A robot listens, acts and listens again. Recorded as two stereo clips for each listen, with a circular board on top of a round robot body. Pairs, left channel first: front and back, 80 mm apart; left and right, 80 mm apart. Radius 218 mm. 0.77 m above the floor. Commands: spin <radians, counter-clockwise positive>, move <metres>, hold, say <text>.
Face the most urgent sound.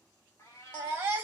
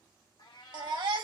spin -2.01
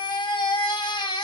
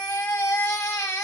spin 0.44
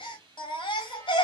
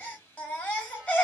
spin 0.35
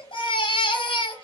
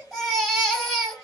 say Facing the baby crying.